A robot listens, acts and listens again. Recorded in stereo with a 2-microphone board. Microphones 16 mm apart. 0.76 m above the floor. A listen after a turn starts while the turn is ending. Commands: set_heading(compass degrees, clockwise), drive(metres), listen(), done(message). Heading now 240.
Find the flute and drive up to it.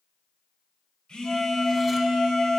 set_heading(215)
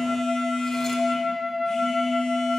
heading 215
drive(1.0)
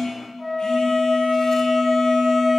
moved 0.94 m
drive(1.0)
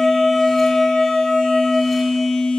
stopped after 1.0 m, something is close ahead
done("Arrived at the flute, straight ahead.")